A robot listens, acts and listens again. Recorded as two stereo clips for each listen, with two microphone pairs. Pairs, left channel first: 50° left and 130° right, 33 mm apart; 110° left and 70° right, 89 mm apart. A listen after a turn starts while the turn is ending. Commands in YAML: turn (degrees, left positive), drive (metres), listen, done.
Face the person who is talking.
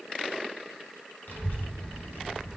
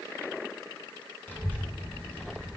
turn: 40
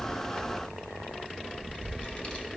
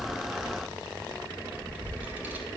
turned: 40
done: "Facing the child speaking."